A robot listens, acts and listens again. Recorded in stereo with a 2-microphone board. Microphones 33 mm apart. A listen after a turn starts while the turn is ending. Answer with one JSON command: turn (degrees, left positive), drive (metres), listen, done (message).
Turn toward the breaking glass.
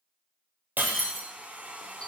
{"turn": -70}
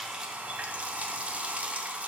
{"listen": true}
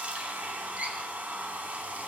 {"done": "I heard breaking glass, but can't make it out now. It was about straight ahead or 40° right."}